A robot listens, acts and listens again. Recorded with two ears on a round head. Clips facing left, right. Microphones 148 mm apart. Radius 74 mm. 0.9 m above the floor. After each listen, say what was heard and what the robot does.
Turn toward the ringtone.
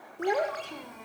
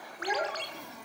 The ringtone: about 45° right or 135° right. Turn 45° right.
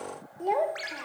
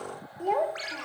Found it: a ringtone, straight ahead.